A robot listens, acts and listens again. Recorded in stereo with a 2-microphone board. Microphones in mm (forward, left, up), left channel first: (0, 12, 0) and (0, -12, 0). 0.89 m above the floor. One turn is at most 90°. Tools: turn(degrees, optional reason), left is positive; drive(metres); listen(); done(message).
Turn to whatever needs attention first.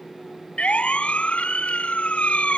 turn(degrees=55, reason="The siren: about 55° left or 125° left.")
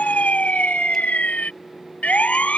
turn(degrees=70, reason="So it is at 70° left.")
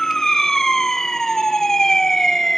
turn(degrees=20, reason="The siren is now 20° left.")
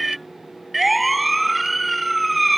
done("Facing the siren.")